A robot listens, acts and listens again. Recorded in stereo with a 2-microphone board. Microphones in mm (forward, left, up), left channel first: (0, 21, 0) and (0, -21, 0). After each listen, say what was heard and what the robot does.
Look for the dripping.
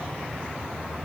Keep listening.
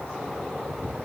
Keep listening.
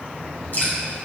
The dripping: about 55° left or 125° left. Turn 55° left.
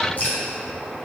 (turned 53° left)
So it is at 55° left. Turn 55° left.
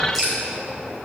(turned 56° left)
Facing the dripping.